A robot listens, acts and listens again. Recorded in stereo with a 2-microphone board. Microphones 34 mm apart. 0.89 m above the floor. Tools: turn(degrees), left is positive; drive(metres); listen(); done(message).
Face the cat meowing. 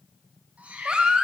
turn(degrees=-40)
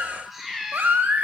turn(degrees=-10)
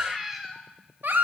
turn(degrees=-10)
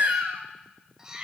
turn(degrees=-25)
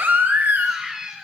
turn(degrees=-20)
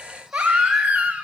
listen()
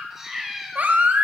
turn(degrees=-10)
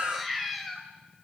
done("Found it: a cat meowing, straight ahead, 1 to 2 m away.")